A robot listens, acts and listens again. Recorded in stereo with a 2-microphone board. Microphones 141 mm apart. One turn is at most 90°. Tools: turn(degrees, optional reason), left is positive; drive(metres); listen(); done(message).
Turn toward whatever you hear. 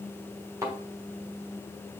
turn(degrees=-20, reason="The thud: about 20° right or 160° right.")
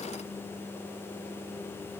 listen()
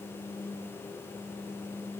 done("I heard a thud, but can't make it out now. It was about straight ahead or 140° right.")